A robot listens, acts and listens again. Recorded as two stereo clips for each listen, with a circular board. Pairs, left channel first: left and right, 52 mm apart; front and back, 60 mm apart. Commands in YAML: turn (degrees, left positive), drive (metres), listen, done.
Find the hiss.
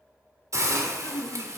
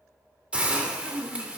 turn: -110
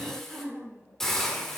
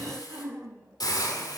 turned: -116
done: "Found it: a hiss, straight ahead, 2 to 4 m away."